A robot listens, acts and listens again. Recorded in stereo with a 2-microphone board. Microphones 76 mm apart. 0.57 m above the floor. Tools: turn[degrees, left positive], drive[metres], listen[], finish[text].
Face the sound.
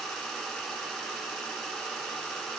Action: listen[]
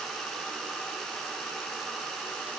Action: listen[]
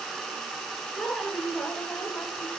Action: turn[30]
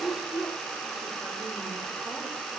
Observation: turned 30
Action: finish[Facing the woman speaking, 2 to 4 m away.]